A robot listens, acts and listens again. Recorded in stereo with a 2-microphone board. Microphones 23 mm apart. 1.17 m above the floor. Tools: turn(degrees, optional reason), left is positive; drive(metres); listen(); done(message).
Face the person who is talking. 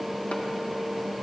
listen()
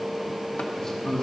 turn(degrees=30, reason="The man speaking: about 30° left or 150° left.")
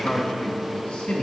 turn(degrees=105, reason="So it is at 105° left.")
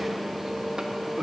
listen()
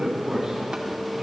turn(degrees=-25, reason="The man speaking is now 25° right.")
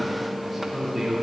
done("Facing the man speaking, 2 to 4 m away.")